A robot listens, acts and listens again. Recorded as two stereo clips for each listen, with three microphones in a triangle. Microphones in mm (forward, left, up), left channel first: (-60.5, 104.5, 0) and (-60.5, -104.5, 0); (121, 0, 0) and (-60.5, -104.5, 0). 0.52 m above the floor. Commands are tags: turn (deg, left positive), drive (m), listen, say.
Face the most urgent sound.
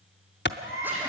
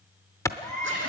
<turn deg="-45"/>
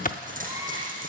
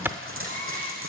<listen/>
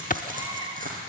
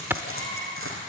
<turn deg="-15"/>
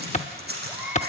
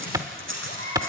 <say>Found it: a baby crying, straight ahead, over 4 m away.</say>